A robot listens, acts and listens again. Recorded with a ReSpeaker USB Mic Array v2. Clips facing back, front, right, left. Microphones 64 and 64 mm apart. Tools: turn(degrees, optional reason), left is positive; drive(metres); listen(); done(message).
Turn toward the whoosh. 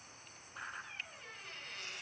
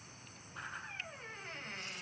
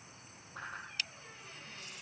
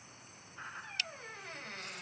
turn(degrees=-90, reason="The whoosh: 90° right.")
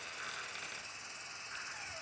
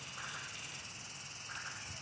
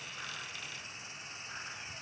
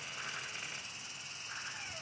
done("Facing the whoosh, over 4 m away.")